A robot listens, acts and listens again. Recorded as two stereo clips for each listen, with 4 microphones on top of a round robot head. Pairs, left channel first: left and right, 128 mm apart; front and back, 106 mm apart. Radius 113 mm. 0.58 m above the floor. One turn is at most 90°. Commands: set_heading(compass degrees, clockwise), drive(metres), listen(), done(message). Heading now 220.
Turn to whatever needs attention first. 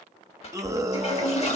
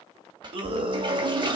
set_heading(310)
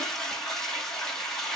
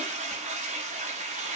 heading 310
set_heading(15)
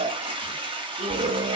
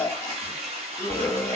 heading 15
set_heading(80)
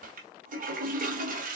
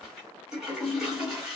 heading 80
listen()
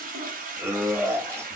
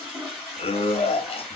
set_heading(100)
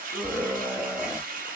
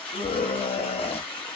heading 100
set_heading(110)
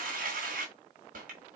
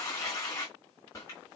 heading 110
listen()
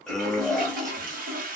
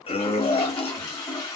done("Facing the scream.")